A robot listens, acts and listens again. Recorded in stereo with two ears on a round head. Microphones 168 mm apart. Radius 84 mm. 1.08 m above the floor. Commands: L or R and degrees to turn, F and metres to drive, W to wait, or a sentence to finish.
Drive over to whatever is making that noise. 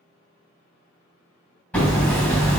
L30
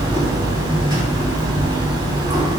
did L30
R25
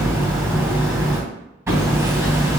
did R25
R15
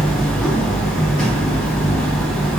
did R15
F1.0
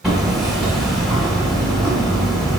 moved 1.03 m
F1.0
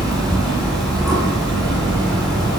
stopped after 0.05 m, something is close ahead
I am next to the hammering.